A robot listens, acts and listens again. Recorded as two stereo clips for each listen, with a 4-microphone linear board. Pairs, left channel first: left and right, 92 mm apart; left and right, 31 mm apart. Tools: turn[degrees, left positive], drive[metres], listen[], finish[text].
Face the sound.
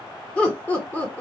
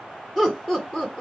Thought: The laughter: about 20° left or 160° left.
Action: turn[20]
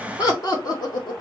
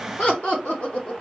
Thought: So it is at 130° left.
Action: turn[130]
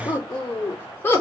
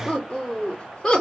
Thought: The laughter is now 25° left.
Action: turn[25]
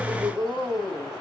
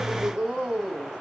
Thought: The laughter is now 10° right.
Action: turn[-10]
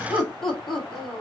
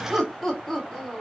Action: finish[Found it: laughter, straight ahead, 2 to 4 m away.]